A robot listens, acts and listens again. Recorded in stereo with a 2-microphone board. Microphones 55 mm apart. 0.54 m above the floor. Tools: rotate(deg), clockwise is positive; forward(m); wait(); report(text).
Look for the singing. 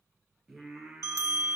rotate(30)
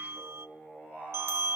rotate(-30)
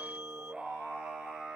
rotate(10)
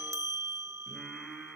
rotate(-10)
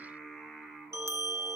report("Found it: singing, straight ahead, over 4 m away.")